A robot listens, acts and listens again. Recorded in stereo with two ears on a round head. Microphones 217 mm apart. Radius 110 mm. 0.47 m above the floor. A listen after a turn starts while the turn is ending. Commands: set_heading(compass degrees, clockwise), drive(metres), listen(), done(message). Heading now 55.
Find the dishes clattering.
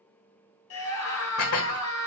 set_heading(355)
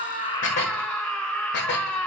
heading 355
set_heading(305)
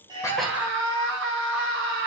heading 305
listen()
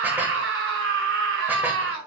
listen()
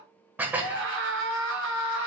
set_heading(315)
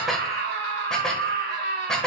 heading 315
done("Found it: dishes clattering, straight ahead, 1 to 2 m away.")